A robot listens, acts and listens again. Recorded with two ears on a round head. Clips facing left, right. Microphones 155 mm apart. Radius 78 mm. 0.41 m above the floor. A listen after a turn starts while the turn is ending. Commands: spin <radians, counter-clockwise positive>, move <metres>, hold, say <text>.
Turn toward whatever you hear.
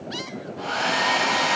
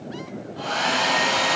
spin -0.96
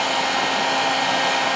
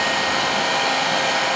spin -0.87
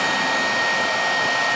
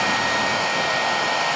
say Facing the hair dryer, 1 to 2 m away.